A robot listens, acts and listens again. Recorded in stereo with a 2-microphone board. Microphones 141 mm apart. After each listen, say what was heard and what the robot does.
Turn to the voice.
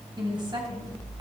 The woman speaking: about 35° right or 145° right. Turn 35° right.
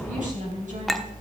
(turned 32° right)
So it is at 115° right. Turn 115° right.
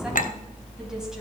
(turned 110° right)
Keep listening.
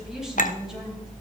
Keep listening.
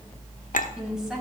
Facing the woman speaking, over 4 m away.